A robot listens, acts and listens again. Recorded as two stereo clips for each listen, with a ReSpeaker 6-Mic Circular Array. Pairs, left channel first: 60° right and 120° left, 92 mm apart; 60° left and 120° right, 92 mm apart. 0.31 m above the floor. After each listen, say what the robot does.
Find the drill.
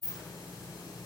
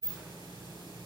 Keep listening.
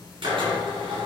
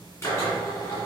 Turn 120° left.
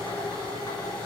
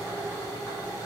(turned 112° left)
Facing the drill.